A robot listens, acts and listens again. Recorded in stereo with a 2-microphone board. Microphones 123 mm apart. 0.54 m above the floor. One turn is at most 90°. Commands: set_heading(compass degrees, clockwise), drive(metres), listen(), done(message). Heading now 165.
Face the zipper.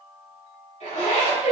set_heading(100)
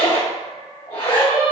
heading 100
set_heading(50)
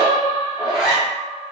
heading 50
done("Facing the zipper.")